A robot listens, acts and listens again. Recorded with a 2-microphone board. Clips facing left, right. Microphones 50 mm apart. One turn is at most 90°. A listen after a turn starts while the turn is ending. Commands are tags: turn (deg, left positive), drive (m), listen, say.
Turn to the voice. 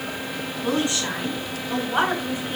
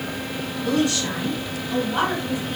<turn deg="30"/>
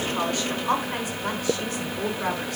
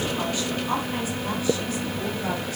<turn deg="90"/>
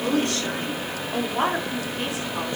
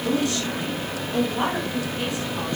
<turn deg="25"/>
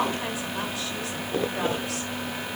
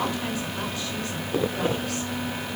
<listen/>
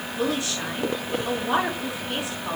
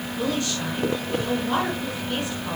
<turn deg="15"/>
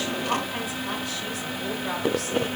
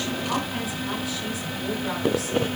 <say>Facing the woman speaking.</say>